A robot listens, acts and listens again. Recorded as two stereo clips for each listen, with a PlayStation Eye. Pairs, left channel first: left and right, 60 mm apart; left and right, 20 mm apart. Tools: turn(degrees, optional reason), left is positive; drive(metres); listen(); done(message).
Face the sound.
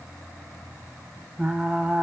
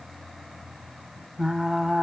turn(degrees=-15, reason="The frying: about 15° right or 165° right.")
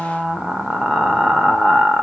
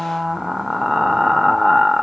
done("Facing the frying, under 1 m away.")